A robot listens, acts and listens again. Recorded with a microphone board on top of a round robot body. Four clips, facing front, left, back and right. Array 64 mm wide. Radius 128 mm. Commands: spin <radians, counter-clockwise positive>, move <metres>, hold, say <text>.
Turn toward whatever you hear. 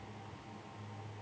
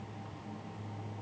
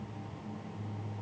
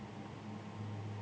hold
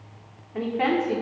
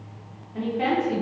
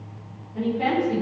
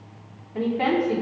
say Found it: a woman speaking, straight ahead, over 4 m away.